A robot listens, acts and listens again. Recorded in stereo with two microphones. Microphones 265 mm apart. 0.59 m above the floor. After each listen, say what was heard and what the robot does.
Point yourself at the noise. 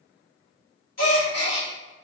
Turn 90° left.
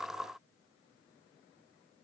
Facing where the gasp came from. I can't hear it now.